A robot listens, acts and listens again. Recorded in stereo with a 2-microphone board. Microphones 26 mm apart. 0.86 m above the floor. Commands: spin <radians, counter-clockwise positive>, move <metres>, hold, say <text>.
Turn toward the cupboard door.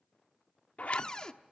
spin 0.52
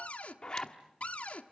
spin 2.09
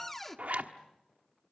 spin 0.17
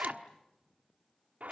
hold
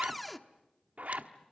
say Facing the cupboard door.